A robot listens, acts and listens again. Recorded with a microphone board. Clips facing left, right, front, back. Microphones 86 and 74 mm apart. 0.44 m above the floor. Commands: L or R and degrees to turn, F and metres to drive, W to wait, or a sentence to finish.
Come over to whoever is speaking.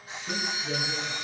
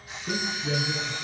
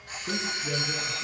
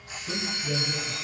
R35
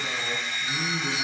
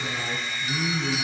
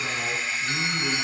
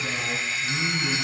F1.0
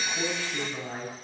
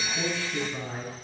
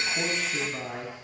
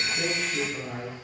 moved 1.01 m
L10
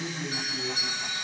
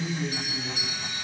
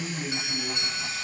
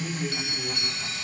F1.0
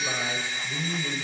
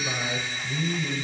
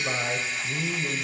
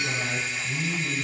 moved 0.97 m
F1.0
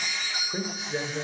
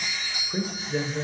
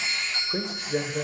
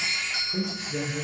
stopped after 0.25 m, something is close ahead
I am next to the man speaking.